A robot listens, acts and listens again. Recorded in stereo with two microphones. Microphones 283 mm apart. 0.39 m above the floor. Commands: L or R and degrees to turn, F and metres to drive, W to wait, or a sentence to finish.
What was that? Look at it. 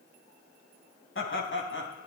L45
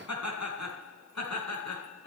L105
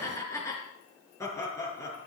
L10
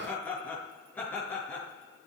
Facing the laughter, over 4 m away.